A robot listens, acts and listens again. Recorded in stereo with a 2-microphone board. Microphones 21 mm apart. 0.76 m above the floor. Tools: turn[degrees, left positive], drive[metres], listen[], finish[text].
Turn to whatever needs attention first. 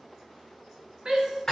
Thought: The shout: about 35° right or 145° right.
Action: turn[-35]
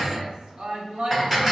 Thought: So it is at 105° right.
Action: turn[-105]
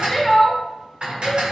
Thought: The shout is now 10° left.
Action: turn[10]
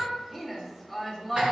Action: finish[Facing the shout, 1 to 2 m away.]